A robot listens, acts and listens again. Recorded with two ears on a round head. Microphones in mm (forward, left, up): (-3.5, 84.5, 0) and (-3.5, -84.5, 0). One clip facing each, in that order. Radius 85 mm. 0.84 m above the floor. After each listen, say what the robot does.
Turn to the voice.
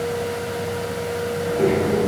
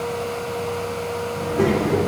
Turn 50° right.
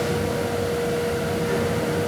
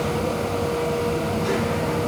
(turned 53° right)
Turn 80° right.
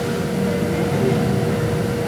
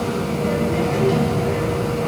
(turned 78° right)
Facing the child speaking.